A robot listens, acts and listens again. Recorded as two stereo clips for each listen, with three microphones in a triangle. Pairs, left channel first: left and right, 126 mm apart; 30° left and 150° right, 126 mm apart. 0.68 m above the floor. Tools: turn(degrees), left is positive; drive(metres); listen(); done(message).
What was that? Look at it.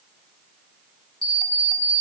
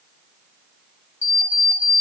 turn(degrees=40)
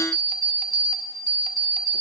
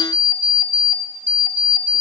done("Facing the alarm clock.")